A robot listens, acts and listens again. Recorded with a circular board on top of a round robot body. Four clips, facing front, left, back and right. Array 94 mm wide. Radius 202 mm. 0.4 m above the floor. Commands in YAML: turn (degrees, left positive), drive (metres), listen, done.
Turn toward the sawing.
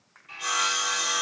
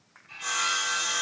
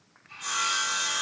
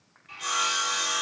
turn: -25
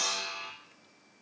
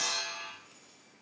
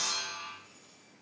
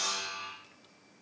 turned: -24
done: "Facing the sawing."